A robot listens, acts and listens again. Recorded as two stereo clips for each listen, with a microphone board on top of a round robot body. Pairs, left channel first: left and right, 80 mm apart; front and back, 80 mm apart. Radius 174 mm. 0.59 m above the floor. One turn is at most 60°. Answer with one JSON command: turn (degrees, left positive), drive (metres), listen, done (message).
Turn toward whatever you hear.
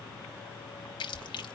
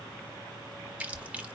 {"turn": 60}
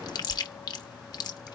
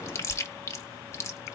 {"turn": 55}
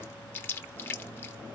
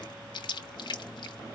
{"turn": 25}
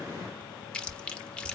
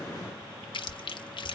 {"turn": 10}
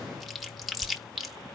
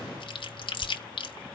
{"done": "Found it: chewing, straight ahead, 1 to 2 m away."}